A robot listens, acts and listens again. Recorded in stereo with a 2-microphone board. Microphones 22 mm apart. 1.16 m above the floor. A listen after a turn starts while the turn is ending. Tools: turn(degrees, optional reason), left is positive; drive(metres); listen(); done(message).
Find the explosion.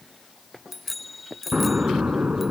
turn(degrees=-75, reason="The explosion: about 75° right or 105° right.")
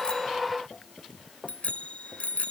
listen()
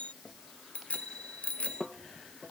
done("I heard an explosion, but can't make it out now. It was about straight ahead or 30° right.")